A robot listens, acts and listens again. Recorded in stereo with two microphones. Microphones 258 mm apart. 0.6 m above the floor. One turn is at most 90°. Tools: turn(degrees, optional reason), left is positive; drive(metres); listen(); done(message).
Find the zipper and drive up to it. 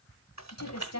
listen()
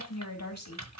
listen()
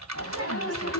turn(degrees=55, reason="The zipper: about 55° left or 125° left.")
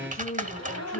turn(degrees=70, reason="So it is at 70° left.")
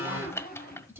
turn(degrees=35, reason="The zipper is now 35° left.")
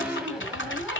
drive(metres=1.0)
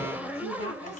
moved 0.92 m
drive(metres=1.0)
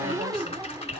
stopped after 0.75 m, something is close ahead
turn(degrees=-15, reason="The zipper is now 15° right.")
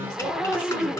done("Arrived at the zipper, straight ahead.")